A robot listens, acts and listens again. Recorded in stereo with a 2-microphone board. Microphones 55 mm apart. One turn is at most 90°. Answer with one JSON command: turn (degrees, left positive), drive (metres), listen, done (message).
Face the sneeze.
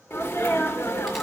{"turn": 40}
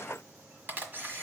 {"listen": true}
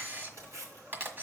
{"done": "I heard a sneeze, but can't make it out now. It was about straight ahead or 100° left."}